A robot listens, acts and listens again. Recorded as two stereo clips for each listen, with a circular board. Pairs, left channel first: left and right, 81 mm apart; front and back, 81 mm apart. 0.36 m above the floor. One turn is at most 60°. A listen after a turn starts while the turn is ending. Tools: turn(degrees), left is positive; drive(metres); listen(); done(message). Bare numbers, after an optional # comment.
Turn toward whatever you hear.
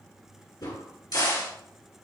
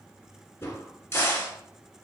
# The crack: 60° left.
turn(60)
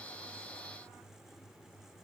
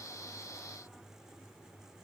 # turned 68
# Nothing new. It was at 10° right.
turn(-10)
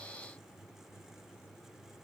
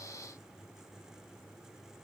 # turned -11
done("Facing where the crack came from. I can't hear it now.")